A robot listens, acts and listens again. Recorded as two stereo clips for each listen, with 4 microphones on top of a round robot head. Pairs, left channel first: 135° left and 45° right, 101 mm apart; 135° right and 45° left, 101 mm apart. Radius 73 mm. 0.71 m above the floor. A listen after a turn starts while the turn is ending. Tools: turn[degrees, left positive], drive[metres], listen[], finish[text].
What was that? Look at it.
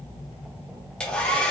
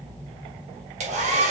Thought: The hair dryer: 55° left.
Action: turn[55]
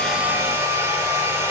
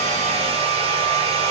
Thought: The hair dryer is now 20° left.
Action: turn[20]
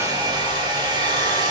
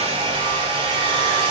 Action: finish[Found it: a hair dryer, straight ahead.]